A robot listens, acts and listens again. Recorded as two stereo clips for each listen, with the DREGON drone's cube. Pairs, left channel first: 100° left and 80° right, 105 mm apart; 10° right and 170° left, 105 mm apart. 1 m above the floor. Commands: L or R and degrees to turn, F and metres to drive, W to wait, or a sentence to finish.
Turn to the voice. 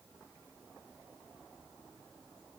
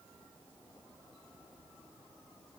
W
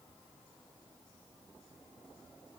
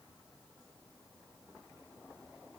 W
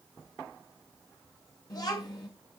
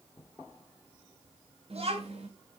L150
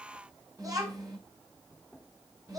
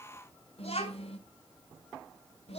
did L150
R25
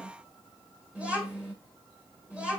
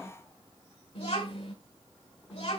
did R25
Found it: a child speaking, straight ahead.